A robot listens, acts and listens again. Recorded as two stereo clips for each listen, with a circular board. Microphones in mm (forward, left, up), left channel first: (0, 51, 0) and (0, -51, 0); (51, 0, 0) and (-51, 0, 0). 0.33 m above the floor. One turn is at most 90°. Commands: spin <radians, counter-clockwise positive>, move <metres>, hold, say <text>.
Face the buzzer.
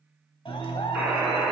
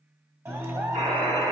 spin -1.57
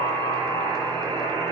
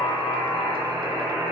spin -1.57
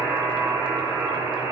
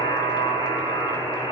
spin -0.52
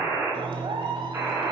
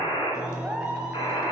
spin -0.44
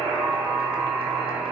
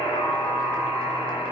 say Facing the buzzer.